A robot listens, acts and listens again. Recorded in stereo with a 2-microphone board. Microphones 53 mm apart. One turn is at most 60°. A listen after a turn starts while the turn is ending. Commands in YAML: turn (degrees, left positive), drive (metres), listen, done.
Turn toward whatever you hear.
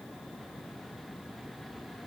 listen: true
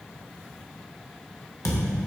turn: 60
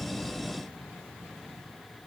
listen: true
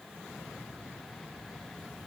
done: "I heard a thud, but can't make it out now. It was about 10° left or 50° left."